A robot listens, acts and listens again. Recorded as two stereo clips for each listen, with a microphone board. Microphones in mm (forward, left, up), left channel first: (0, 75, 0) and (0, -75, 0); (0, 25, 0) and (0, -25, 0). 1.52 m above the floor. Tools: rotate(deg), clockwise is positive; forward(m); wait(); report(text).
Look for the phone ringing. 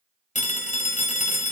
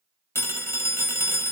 rotate(-55)
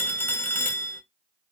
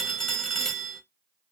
rotate(-15)
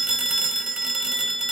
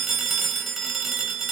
report("Facing the phone ringing.")